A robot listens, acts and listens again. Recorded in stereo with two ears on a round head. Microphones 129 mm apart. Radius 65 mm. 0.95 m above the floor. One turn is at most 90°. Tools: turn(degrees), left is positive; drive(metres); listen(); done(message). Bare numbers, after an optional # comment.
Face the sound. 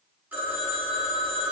turn(-30)
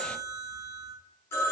# So it is at 20° left.
turn(20)
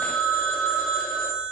done("Found it: a phone ringing, straight ahead.")